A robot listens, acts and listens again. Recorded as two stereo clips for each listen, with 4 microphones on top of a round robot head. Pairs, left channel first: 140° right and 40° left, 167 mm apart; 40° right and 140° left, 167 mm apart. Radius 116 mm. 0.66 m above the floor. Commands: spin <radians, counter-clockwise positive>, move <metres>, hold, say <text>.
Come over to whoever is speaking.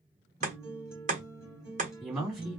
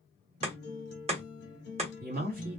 spin 2.27
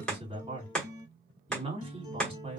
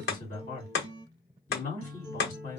spin -0.17
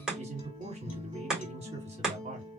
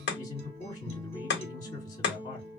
move 1.0
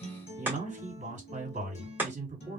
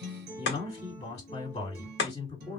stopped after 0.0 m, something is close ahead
say Blocked. The man speaking is further on, straight ahead.